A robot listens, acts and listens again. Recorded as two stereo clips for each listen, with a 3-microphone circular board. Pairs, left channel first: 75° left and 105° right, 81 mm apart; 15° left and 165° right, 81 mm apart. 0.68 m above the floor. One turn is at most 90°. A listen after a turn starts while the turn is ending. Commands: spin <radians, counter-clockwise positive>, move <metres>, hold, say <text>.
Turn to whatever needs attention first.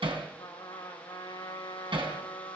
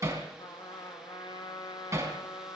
hold
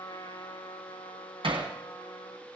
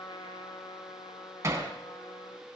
hold
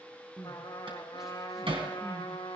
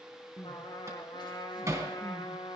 spin -0.35
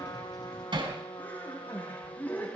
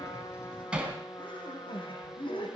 say Found it: crying, straight ahead.